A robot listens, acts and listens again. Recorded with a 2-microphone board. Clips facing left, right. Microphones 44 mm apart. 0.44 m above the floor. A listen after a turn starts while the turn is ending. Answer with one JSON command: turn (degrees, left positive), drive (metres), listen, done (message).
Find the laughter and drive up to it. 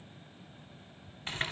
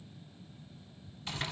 {"listen": true}
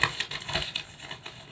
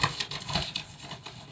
{"listen": true}
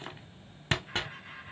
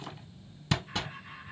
{"turn": 40}
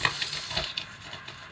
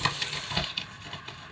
{"listen": true}
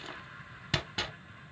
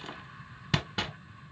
{"listen": true}
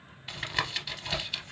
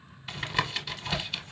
{"done": "I heard laughter, but can't make it out now. It was about straight ahead or 100° left. I did not reach it."}